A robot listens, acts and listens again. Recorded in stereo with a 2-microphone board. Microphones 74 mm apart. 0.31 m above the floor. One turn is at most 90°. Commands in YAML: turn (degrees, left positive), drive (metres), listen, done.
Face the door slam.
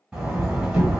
turn: -30
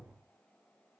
listen: true
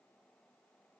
done: "I heard a door slam, but can't make it out now. It was about 20° left or 140° right."